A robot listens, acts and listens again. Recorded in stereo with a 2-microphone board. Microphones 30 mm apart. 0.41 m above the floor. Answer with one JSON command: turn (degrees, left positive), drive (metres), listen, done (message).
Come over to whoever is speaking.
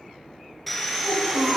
{"turn": -60}
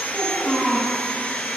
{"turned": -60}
{"drive": 1.0}
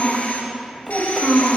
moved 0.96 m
{"drive": 1.0}
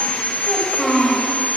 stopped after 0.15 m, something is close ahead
{"done": "I am next to the child speaking."}